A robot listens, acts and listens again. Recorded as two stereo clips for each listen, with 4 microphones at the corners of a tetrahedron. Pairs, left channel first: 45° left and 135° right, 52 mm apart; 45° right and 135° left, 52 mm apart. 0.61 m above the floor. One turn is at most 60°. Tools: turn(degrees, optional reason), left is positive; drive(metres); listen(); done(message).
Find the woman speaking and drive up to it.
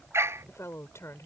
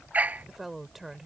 turn(degrees=50, reason="The woman speaking: 50° left.")
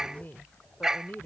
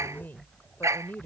drive(metres=1.0)
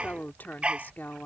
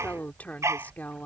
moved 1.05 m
drive(metres=1.0)
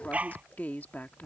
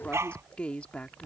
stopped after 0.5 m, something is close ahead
turn(degrees=10, reason="The woman speaking is now 10° left.")
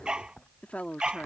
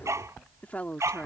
done("Arrived at the woman speaking, straight ahead.")